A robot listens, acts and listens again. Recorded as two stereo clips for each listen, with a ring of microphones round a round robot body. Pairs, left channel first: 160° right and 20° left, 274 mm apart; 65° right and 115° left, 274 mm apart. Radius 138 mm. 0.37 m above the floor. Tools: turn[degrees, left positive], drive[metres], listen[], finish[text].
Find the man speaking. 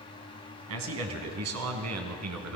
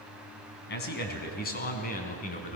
Action: finish[Facing the man speaking.]